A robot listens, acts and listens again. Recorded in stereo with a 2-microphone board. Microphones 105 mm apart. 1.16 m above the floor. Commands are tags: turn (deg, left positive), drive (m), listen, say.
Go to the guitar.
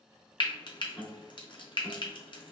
<turn deg="30"/>
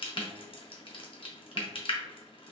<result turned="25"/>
<listen/>
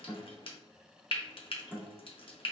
<turn deg="-15"/>
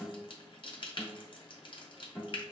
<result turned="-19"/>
<drive m="1.0"/>
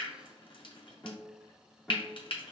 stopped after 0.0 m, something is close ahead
<say>Blocked. The guitar is further on, straight ahead.</say>